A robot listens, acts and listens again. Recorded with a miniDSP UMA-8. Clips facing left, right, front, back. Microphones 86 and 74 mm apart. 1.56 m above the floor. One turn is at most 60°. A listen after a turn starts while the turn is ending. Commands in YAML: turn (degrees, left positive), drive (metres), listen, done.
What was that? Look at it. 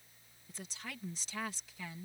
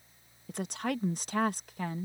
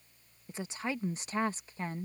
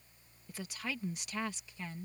turn: -50
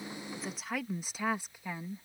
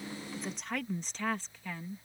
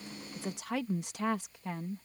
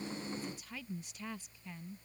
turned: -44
turn: 15
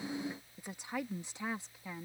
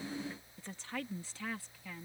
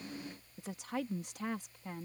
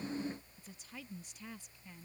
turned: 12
turn: 25
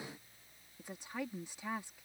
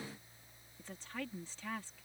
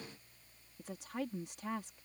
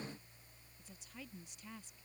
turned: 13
turn: 15
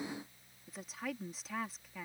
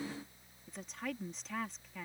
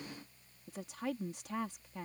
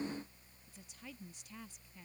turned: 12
done: "Facing the woman speaking."